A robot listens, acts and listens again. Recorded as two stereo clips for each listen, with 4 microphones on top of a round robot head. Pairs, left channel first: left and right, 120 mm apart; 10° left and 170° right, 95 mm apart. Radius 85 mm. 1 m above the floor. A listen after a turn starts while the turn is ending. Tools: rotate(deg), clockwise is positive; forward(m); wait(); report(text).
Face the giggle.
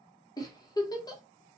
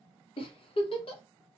rotate(-30)
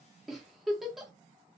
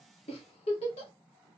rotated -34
report("Found it: a giggle, straight ahead, under 1 m away.")